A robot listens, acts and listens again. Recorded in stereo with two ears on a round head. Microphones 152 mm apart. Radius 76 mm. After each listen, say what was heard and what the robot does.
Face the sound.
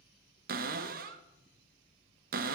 The cupboard door: about 55° right or 125° right. Turn 55° right.
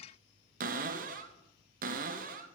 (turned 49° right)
So it is at 60° right. Turn 60° right.
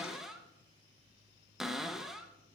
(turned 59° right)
Found it: a cupboard door, straight ahead.